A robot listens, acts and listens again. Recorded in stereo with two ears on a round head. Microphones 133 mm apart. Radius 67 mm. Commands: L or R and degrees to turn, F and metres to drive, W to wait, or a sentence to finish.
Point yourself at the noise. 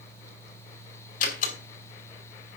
L65
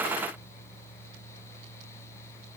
W
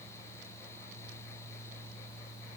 I heard a door slam, but can't make it out now. It was about straight ahead or 50° left.